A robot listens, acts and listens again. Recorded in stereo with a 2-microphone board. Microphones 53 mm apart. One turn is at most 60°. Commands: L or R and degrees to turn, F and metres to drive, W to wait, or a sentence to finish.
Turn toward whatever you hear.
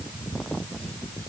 W
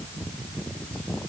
W
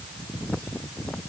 I can't make out anything.